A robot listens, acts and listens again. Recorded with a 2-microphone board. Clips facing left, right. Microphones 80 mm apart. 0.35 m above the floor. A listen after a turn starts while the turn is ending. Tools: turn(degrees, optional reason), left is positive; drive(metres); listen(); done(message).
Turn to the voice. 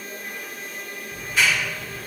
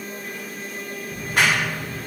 listen()
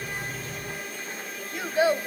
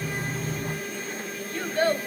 turn(degrees=30)
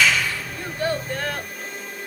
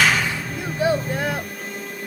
turn(degrees=-15, reason="So it is at 15° right.")
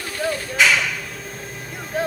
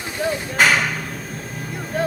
done("Facing the child speaking.")